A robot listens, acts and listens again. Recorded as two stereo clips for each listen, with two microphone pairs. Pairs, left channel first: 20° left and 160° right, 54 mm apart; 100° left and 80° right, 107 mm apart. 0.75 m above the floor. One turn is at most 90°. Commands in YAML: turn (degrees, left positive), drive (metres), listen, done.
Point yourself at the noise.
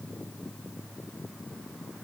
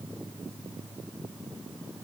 listen: true
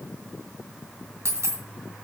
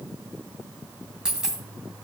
turn: -90
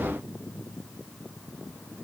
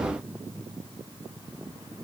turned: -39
turn: -90
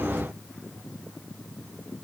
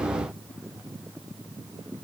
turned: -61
turn: -65
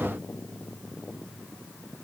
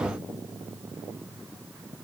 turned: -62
done: "Facing where the dropped coin came from. I can't hear it now."